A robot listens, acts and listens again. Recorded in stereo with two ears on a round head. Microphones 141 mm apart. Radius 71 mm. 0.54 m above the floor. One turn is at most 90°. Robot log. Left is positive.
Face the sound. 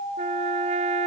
note: The trumpet: about 40° right or 140° right.
cmd yaw -40
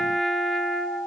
end: Facing the trumpet.